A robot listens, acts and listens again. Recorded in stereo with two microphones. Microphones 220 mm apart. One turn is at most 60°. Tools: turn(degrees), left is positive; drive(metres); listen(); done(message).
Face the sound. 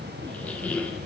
turn(degrees=30)
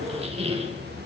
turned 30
turn(degrees=-25)
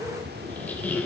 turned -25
done("Found it: a squeak, straight ahead, 1 to 2 m away.")